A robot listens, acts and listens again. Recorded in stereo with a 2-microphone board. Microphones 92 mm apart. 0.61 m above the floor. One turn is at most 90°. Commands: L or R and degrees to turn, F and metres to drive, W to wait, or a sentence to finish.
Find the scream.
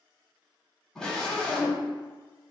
L30
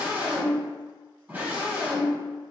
R20
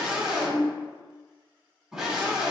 R10
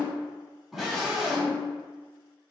Found it: a scream, straight ahead, 1 to 2 m away.